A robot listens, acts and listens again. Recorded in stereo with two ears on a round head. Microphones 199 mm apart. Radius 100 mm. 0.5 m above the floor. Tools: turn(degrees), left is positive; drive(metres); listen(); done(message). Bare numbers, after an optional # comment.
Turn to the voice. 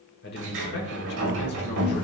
# The man speaking: about 50° left or 130° left.
turn(50)
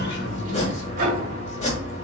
listen()
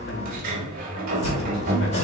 listen()
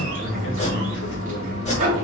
done("I heard a man speaking, but can't make it out now. It was about straight ahead or 80° left.")